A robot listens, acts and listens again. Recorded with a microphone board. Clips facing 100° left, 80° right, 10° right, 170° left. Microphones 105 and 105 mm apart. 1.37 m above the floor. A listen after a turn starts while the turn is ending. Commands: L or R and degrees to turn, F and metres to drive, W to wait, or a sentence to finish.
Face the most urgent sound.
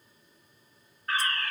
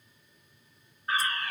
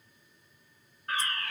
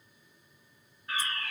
Facing the fire alarm, 1 to 2 m away.